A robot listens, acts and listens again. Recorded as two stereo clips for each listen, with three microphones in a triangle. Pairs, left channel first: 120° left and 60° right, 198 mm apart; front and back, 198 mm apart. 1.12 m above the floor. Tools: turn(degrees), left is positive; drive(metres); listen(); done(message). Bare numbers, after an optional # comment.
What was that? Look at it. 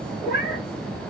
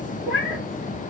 # The cat meowing: 165° left.
turn(165)
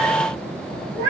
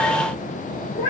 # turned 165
# The cat meowing is now 10° right.
turn(-10)
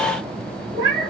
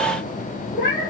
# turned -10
done("Found it: a cat meowing, straight ahead, 2 to 4 m away.")